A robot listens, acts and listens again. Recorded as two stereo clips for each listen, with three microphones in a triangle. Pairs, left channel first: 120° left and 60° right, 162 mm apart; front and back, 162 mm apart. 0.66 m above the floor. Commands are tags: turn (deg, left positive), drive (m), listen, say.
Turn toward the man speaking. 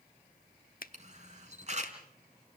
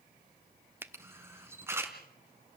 <listen/>
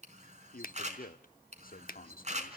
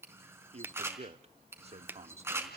<turn deg="135"/>
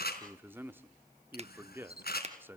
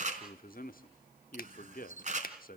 <turn deg="15"/>
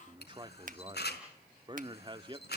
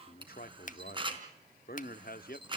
<say>Facing the man speaking, 1 to 2 m away.</say>